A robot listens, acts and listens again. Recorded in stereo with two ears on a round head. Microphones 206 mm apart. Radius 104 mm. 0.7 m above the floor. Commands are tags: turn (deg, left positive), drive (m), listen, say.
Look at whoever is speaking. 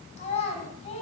<turn deg="30"/>
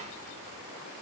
<listen/>
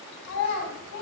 <turn deg="120"/>
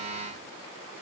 <listen/>
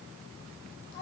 <turn deg="40"/>
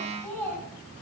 <turn deg="10"/>
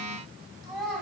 <say>Facing the child speaking, 2 to 4 m away.</say>